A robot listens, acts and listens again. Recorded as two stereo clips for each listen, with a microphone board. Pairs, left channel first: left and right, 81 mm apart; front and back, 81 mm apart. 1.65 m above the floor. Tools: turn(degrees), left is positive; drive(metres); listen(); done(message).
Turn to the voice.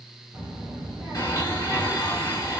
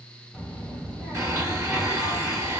turn(degrees=-125)
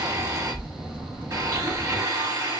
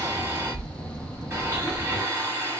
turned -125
turn(degrees=-25)
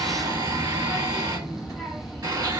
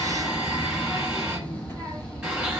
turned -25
done("Facing the child speaking, 1 to 2 m away.")